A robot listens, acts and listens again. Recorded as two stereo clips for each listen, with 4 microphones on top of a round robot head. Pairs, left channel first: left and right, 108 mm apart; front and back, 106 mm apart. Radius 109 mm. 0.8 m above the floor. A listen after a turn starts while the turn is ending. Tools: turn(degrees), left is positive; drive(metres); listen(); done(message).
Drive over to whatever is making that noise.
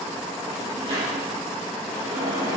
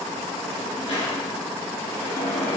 turn(degrees=-40)
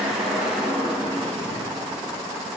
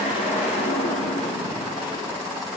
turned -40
drive(metres=1.0)
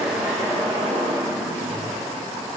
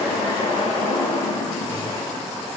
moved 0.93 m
drive(metres=1.0)
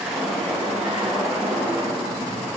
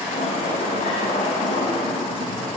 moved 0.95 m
drive(metres=1.0)
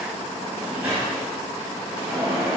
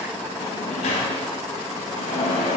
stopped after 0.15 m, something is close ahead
turn(degrees=-10)
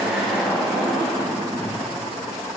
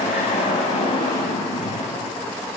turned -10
done("I am next to the sliding door.")